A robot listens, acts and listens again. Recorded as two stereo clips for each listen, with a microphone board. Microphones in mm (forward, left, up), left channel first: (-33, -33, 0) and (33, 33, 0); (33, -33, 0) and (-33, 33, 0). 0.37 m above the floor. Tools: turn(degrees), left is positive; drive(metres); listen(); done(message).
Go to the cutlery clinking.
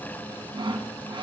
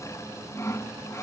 listen()
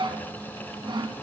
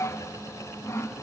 listen()
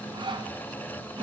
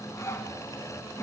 done("I can't make out cutlery clinking, only sawing.")